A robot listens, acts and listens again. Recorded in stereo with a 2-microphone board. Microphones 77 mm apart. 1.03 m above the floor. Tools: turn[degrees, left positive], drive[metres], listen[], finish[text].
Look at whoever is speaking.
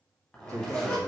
Thought: The man speaking: about 40° right or 140° right.
Action: turn[-40]
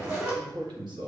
Thought: So it is at 95° right.
Action: turn[-95]
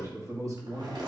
Thought: The man speaking is now 50° right.
Action: turn[-50]
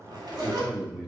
Action: finish[Facing the man speaking, 2 to 4 m away.]